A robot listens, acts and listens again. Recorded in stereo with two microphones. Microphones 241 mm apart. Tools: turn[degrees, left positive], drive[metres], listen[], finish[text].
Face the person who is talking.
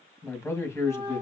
Action: turn[30]
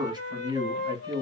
Thought: So it is at 20° right.
Action: turn[-20]
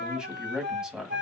Action: finish[Facing the man speaking.]